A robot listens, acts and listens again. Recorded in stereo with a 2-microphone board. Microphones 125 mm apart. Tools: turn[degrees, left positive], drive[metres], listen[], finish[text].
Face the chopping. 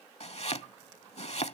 Thought: The chopping: about 55° left or 125° left.
Action: turn[55]
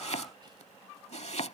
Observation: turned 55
Thought: So it is at 65° left.
Action: turn[65]
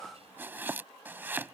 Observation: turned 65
Thought: The chopping is now 15° right.
Action: turn[-15]
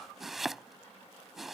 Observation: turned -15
Action: finish[Facing the chopping.]